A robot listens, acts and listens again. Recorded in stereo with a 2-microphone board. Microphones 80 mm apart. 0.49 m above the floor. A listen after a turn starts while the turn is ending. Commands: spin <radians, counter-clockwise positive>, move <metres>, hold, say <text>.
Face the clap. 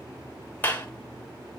spin 0.44
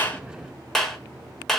say Found it: a clap, straight ahead, 1 to 2 m away.